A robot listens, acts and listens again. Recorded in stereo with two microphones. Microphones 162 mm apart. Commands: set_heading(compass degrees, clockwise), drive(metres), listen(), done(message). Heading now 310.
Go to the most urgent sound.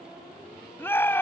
set_heading(280)
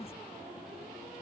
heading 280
listen()
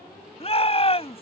set_heading(145)
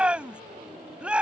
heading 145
set_heading(155)
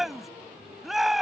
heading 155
drive(1.0)
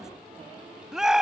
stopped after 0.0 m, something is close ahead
done("Blocked. The shout is further on, straight ahead.")